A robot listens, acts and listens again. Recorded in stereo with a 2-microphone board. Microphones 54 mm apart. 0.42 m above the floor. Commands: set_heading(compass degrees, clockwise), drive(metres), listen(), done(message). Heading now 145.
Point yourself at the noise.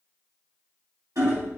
set_heading(235)
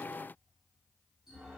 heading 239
listen()
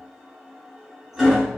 set_heading(249)
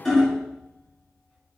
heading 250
done("Found it: hammering, straight ahead, under 1 m away.")